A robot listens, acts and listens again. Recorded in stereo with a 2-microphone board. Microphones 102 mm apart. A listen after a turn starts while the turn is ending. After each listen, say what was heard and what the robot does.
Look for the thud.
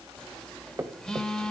The thud: about 25° right or 155° right. Turn 25° right.
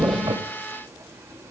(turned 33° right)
Keep listening.
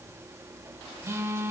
I heard a thud, but can't make it out now. It was about 5° left or 120° right.